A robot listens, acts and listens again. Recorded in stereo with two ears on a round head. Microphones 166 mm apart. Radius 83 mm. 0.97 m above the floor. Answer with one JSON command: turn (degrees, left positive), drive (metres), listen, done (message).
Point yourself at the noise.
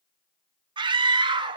{"turn": -30}
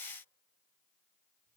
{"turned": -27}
{"listen": true}
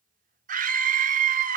{"turn": -120}
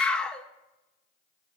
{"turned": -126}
{"done": "Found it: a scream, straight ahead."}